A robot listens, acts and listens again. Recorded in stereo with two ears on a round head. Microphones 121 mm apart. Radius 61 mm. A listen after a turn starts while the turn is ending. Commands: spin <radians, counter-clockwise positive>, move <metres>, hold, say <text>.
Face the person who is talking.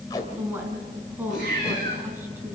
spin -0.52
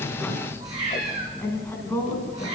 spin 0.35
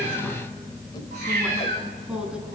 hold
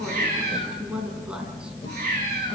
say Found it: a woman speaking, straight ahead.